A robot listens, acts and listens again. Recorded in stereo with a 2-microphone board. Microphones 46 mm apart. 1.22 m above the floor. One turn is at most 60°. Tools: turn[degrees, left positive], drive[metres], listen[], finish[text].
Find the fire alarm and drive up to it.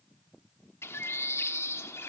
Action: listen[]
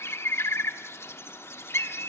Action: listen[]
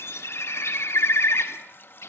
Action: finish[I can't make out a fire alarm to turn to.]